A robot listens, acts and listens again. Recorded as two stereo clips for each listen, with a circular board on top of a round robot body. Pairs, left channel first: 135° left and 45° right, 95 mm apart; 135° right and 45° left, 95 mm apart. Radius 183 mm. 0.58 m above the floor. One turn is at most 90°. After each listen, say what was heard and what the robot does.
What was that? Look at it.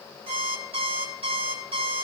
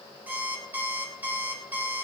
The alarm clock: 30° right. Turn 30° right.
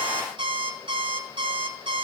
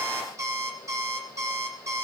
The alarm clock is now 15° right. Turn 15° right.
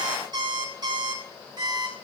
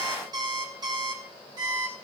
Found it: an alarm clock, straight ahead, 2 to 4 m away.